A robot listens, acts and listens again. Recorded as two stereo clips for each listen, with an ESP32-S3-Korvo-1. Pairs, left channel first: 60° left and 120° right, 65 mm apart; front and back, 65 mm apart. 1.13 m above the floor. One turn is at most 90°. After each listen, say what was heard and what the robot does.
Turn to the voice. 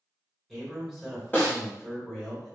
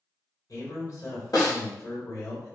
The man speaking: 30° right. Turn 30° right.
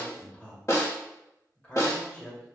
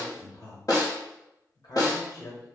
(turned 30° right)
The man speaking is now 10° right. Turn 10° right.
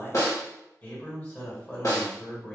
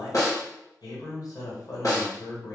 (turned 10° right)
Facing the man speaking, 1 to 2 m away.